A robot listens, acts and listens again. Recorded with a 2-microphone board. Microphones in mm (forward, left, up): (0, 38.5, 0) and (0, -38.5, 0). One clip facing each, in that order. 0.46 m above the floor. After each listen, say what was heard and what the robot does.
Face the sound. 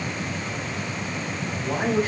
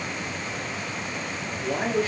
The woman speaking: about 35° left or 145° left. Turn 35° left.
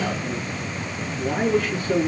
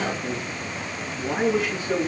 So it is at 10° right. Turn 10° right.
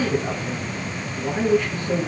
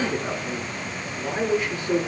The woman speaking is now 15° right. Turn 15° right.
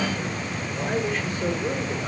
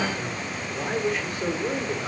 Found it: a woman speaking, straight ahead, over 4 m away.